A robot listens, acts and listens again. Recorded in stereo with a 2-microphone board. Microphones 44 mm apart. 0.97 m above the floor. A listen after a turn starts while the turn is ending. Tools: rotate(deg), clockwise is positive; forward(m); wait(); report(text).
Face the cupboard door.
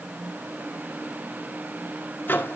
wait()
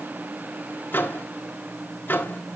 wait()
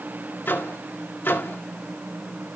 report("I can't make out a cupboard door to turn to.")